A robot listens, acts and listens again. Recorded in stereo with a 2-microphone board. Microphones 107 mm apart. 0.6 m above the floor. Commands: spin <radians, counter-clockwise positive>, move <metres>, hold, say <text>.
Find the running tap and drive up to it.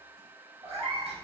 hold
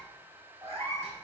hold
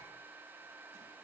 say I can't make out a running tap to turn to.